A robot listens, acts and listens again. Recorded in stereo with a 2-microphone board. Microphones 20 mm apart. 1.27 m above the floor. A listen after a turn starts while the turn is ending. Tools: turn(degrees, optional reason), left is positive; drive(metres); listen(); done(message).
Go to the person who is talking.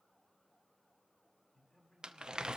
turn(degrees=25, reason="The man speaking: about 25° left or 155° left.")
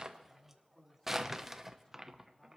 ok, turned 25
turn(degrees=130, reason="So it is at 130° left.")
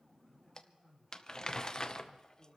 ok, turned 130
turn(degrees=-35, reason="The man speaking is now 35° right.")
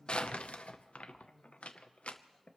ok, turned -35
drive(metres=1.0)
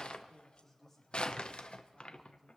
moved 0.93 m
drive(metres=1.0)
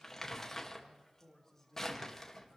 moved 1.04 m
turn(degrees=15, reason="The man speaking is now 15° left.")
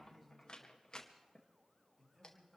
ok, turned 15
drive(metres=1.0)
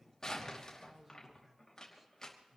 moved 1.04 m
turn(degrees=-10, reason="The man speaking is now 10° right.")
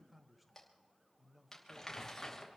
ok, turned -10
drive(metres=1.0)
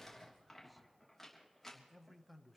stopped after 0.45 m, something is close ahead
done("Arrived at the man speaking, straight ahead.")